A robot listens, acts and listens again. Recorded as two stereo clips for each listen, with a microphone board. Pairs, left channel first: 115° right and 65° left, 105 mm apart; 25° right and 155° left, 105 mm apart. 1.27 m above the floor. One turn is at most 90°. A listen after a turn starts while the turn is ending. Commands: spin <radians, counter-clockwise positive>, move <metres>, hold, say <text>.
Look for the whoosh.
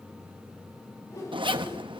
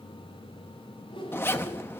spin -0.96
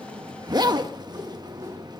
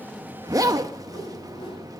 hold
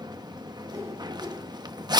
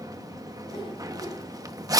hold
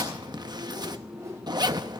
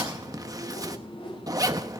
spin 0.17
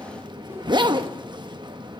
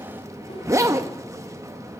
hold
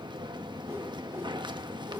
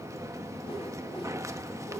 hold
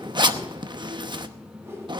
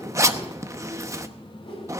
say Found it: a whoosh, straight ahead, 2 to 4 m away.